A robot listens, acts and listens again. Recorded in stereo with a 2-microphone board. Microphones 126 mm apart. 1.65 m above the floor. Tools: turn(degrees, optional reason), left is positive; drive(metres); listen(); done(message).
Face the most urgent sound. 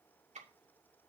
listen()
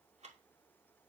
listen()
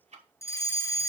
turn(degrees=20, reason="The fire alarm: about 20° left or 160° left.")
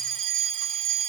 done("Facing the fire alarm.")